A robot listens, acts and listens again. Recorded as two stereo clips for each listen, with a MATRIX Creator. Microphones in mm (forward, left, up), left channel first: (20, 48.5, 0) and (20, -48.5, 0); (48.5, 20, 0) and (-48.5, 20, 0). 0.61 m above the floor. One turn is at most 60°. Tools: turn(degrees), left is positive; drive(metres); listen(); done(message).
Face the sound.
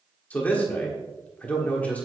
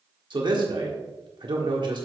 turn(degrees=60)
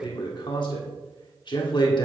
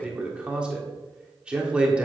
turn(degrees=60)
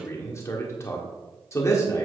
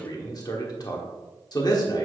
turn(degrees=35)
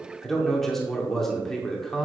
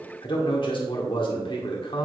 done("Found it: a man speaking, straight ahead.")